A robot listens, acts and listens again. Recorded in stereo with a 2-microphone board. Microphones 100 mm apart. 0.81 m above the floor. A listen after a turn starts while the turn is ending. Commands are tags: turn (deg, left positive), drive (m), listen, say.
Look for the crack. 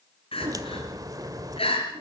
<turn deg="-40"/>
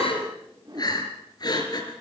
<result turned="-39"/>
<listen/>
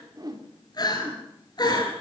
<say>I heard a crack, but can't make it out now. It was about straight ahead or 100° right.</say>